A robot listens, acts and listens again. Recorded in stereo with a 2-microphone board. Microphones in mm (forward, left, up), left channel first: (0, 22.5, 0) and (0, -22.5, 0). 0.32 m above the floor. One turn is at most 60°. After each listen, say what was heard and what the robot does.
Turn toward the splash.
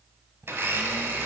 Keep listening.
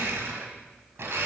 Keep listening.
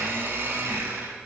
I can't make out a splash, only a blender.